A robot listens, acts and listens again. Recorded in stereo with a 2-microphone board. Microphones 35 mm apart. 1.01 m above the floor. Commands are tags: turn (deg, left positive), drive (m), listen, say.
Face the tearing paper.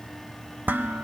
<listen/>
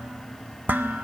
<listen/>
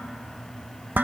<say>I can't make out tearing paper to turn to.</say>